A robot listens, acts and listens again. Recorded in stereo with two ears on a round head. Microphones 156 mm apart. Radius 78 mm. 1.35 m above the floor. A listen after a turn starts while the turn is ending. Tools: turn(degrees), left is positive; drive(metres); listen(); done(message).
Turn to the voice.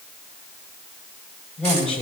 turn(degrees=30)
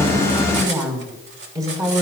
turn(degrees=-20)
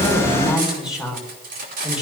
done("Facing the woman speaking.")